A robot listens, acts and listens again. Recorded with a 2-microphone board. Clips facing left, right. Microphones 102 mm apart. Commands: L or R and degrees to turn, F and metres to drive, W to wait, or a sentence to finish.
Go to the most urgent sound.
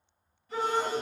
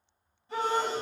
R70
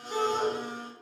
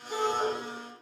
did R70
F1.0
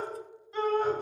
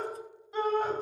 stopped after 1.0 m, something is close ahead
R15
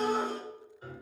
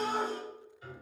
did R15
Arrived at the shout, straight ahead.